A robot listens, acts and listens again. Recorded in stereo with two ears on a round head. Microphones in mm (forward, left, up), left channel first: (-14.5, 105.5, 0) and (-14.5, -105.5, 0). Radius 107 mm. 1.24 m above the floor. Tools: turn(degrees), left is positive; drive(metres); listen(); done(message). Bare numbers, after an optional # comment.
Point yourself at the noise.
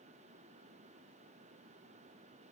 listen()
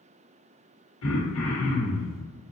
# The throat clearing: about 65° left or 115° left.
turn(65)
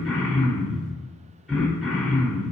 done("Found it: throat clearing, straight ahead, 1 to 2 m away.")